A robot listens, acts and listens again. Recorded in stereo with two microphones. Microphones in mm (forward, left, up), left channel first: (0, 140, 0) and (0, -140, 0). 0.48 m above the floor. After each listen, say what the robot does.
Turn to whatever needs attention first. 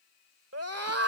Turn 55° right.
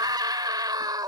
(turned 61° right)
Turn 15° right.
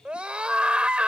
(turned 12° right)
Found it: a scream, straight ahead.